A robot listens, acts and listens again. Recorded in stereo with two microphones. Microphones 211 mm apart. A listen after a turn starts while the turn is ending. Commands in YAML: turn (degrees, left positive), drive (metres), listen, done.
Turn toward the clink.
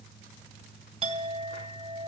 turn: -25
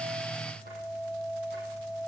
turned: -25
done: "Found it: a clink, straight ahead."